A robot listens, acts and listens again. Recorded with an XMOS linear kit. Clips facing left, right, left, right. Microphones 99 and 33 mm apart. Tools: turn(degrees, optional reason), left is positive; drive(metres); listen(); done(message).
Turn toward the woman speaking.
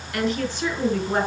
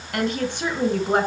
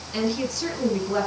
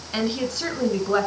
turn(degrees=-60, reason="The woman speaking: about 60° right or 120° right.")
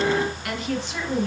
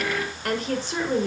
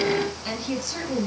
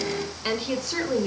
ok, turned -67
turn(degrees=-35, reason="So it is at 35° right.")
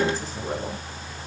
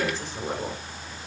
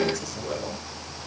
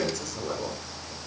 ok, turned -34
done("Facing the woman speaking.")